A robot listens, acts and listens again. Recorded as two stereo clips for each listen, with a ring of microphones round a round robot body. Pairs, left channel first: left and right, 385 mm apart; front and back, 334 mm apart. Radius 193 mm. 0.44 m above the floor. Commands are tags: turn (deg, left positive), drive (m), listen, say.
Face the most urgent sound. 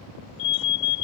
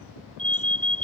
<turn deg="85"/>
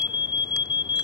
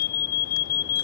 <turn deg="10"/>
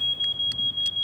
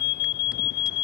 <say>Facing the alarm.</say>